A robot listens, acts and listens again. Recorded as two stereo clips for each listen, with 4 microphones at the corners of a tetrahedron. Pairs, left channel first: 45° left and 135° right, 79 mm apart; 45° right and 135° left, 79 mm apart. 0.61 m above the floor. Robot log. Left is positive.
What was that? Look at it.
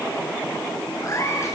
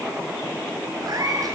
note: The cat meowing: 95° left.
cmd yaw +95
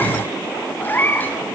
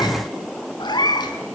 note: The cat meowing is now 20° right.
cmd yaw -20
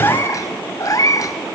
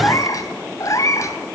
end: Found it: a cat meowing, straight ahead, 1 to 2 m away.